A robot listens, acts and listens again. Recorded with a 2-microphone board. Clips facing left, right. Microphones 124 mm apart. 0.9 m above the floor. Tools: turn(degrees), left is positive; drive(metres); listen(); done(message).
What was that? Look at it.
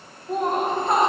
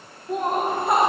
turn(degrees=-30)
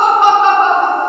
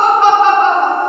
turn(degrees=15)
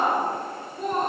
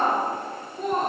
done("Facing the laughter, 2 to 4 m away.")